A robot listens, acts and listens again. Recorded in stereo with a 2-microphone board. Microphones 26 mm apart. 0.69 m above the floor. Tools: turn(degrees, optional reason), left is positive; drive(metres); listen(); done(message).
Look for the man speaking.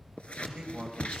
turn(degrees=-25, reason="The man speaking: about 25° right or 155° right.")
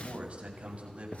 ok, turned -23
turn(degrees=-125, reason="So it is at 125° right.")
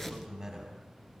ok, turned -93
turn(degrees=-25, reason="The man speaking is now 25° right.")
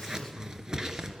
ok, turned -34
turn(degrees=10, reason="Nothing new. It was at 10° left.")
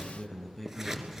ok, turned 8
done("Found it: a man speaking, straight ahead, over 4 m away.")